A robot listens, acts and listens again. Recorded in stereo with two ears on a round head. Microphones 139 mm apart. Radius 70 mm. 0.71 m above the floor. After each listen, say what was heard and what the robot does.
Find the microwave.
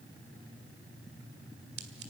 Keep listening.
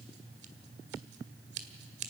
Keep listening.
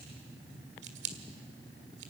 I can't make out a microwave to turn to.